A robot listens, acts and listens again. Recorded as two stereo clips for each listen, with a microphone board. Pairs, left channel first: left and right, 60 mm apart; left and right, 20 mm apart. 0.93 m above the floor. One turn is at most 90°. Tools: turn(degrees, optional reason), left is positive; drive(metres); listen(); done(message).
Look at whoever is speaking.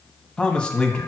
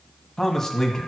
turn(degrees=20, reason="The man speaking: about 20° left or 160° left.")
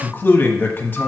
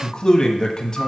turn(degrees=90, reason="So it is at 140° left.")
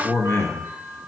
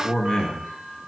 turn(degrees=60, reason="The man speaking is now 60° left.")
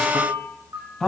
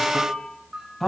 done("Found it: a man speaking, straight ahead.")